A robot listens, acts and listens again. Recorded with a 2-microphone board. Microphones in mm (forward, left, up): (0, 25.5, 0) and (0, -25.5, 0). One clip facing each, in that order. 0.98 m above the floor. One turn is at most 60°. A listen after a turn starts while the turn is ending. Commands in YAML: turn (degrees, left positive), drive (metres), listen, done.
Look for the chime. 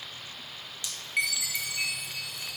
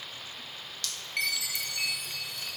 turn: 30
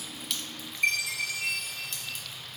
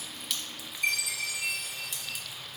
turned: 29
turn: 60
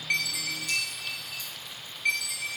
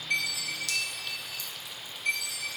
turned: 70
turn: 60
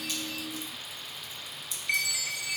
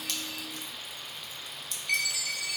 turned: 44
turn: 25
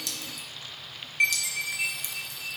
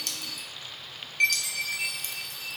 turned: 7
turn: 20
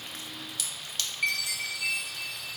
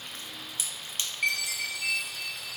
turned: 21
done: "Facing the chime, under 1 m away."